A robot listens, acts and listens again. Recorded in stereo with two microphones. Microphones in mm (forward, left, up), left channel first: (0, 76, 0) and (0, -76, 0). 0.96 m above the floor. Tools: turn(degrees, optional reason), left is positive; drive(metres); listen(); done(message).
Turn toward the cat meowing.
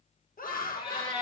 turn(degrees=35, reason="The cat meowing: about 35° left or 145° left.")
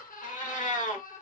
turn(degrees=100, reason="So it is at 100° left.")
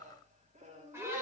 listen()
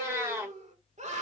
turn(degrees=-20, reason="The cat meowing is now 20° right.")
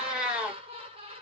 done("Facing the cat meowing, 1 to 2 m away.")